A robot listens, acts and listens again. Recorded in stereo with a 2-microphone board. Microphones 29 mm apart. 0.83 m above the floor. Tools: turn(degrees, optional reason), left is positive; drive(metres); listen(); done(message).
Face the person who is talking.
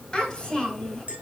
turn(degrees=30)
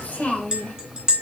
turn(degrees=135, reason="So it is at 135° left.")
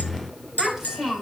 done("Found it: a child speaking, straight ahead.")